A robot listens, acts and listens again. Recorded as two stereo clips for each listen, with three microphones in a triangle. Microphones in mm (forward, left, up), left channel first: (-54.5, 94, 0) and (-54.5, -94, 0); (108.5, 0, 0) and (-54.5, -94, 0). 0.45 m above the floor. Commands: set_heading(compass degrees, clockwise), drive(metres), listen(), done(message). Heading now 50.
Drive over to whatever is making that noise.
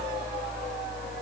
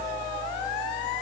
listen()
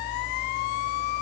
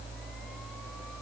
listen()
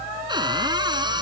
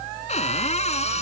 set_heading(75)
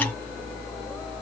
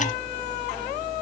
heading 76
listen()
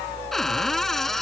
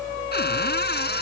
drive(1.0)
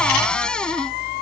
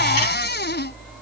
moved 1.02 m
drive(1.0)
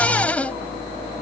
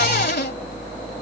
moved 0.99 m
set_heading(66)
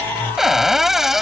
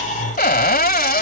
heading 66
drive(1.0)
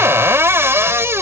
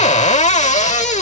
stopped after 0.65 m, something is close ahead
set_heading(81)
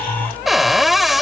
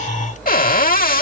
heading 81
done("I am next to the cupboard door.")